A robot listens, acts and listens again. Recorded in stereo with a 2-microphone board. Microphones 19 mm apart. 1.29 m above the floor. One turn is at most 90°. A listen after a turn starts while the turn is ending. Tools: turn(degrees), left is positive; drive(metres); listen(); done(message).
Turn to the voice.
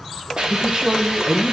turn(degrees=-55)
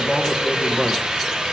done("Found it: a man speaking, straight ahead.")